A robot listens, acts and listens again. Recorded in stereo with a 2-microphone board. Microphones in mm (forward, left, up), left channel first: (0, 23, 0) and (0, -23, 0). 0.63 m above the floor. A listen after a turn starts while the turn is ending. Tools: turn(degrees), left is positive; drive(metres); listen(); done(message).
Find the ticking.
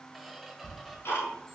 turn(degrees=60)
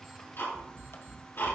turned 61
turn(degrees=60)
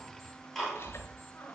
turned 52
turn(degrees=10)
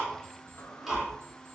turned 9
done("Found it: ticking, straight ahead, over 4 m away.")